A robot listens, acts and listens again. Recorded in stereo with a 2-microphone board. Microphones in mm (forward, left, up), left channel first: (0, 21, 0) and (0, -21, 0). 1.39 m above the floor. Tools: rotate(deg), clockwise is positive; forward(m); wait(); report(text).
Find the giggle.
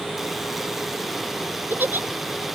rotate(50)
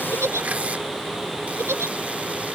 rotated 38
rotate(90)
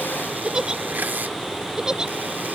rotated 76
rotate(15)
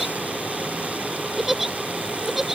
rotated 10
report("Found it: a giggle, straight ahead.")